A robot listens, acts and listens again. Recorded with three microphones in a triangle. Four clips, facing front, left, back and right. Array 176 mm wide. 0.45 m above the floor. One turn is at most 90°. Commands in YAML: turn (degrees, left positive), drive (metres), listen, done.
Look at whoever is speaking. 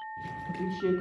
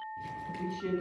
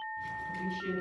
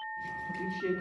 done: "Facing the man speaking, 2 to 4 m away."